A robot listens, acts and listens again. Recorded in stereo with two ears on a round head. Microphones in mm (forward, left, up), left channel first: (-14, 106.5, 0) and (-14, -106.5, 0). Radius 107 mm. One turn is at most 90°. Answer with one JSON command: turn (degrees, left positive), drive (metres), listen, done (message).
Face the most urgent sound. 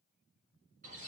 {"listen": true}
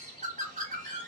{"listen": true}
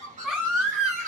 {"turn": -30}
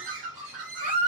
{"turn": -90}
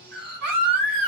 {"turn": -80}
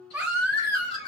{"done": "Facing the baby crying."}